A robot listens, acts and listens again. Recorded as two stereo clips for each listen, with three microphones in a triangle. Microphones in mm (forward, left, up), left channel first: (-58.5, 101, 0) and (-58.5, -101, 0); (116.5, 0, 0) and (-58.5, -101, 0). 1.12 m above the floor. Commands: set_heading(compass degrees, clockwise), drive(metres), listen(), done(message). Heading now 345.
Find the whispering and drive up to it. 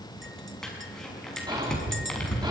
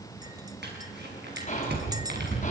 set_heading(10)
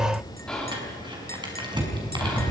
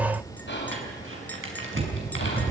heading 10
drive(1.0)
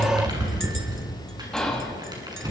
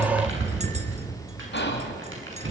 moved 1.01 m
drive(1.0)
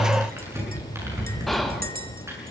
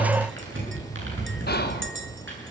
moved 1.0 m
drive(1.0)
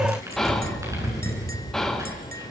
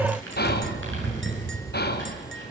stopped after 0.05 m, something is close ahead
done("I am next to the whispering.")